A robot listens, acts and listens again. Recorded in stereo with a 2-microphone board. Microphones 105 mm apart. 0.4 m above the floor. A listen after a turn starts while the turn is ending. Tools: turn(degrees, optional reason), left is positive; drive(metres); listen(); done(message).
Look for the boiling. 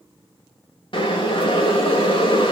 turn(degrees=55, reason="The boiling: about 55° left or 125° left.")
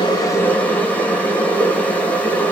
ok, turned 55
turn(degrees=20, reason="So it is at 20° left.")
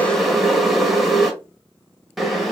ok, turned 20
done("Facing the boiling, 1 to 2 m away.")